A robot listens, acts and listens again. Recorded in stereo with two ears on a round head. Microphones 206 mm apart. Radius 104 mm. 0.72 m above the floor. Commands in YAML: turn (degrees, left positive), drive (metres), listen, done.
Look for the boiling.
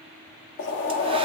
turn: 55
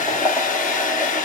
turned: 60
done: "Facing the boiling, 1 to 2 m away."